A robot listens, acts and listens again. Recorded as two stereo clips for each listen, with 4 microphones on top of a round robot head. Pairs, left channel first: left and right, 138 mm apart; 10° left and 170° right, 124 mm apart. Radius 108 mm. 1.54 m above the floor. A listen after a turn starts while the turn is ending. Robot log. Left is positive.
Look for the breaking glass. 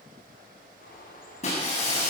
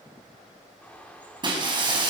note: The breaking glass: 140° left.
cmd yaw +140
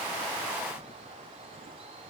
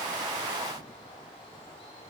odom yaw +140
end: I heard breaking glass from this way, but can't make it out now.